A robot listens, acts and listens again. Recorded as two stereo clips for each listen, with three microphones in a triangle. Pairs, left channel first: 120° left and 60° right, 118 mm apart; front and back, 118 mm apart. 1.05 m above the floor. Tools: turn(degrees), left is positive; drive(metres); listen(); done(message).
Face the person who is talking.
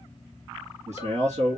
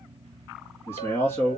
turn(degrees=-70)
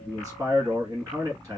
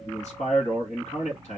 done("Facing the man speaking, 1 to 2 m away.")